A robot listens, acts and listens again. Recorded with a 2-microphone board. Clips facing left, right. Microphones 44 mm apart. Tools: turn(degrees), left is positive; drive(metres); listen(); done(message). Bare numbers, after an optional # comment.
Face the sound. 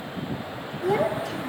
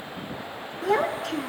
turn(-90)
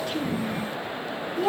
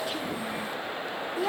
done("Facing the child speaking.")